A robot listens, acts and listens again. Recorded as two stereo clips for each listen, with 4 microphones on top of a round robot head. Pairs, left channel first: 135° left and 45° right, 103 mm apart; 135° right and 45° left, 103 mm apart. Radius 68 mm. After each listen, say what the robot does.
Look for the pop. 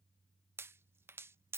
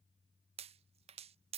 Turn 20° left.
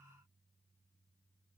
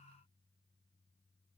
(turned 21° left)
Facing where the pop came from. I can't hear it now.